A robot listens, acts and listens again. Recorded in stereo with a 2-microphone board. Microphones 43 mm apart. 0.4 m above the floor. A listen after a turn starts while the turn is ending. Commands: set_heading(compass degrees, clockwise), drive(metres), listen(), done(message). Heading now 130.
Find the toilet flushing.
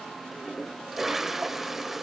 set_heading(160)
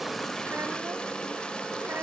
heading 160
set_heading(135)
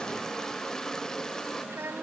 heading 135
set_heading(120)
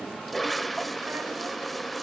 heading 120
done("Found it: a toilet flushing, straight ahead.")